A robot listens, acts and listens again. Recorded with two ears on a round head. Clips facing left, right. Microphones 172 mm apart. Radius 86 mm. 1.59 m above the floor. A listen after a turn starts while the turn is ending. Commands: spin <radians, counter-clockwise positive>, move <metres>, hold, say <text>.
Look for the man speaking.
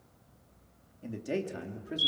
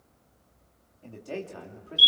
spin 0.35
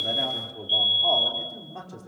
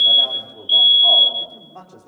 spin 0.52
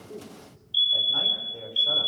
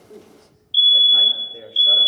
hold
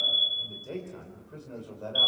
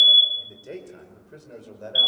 spin -0.35
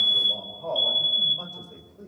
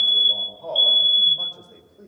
say Facing the man speaking, over 4 m away.